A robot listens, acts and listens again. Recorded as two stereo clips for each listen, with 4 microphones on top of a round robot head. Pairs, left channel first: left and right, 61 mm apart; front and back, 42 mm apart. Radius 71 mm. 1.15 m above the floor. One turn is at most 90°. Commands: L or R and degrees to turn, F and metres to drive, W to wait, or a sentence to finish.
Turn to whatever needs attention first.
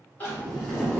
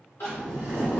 L30
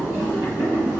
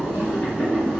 W
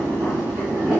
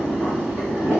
W
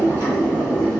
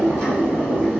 Facing where the crying came from. I can't hear it now.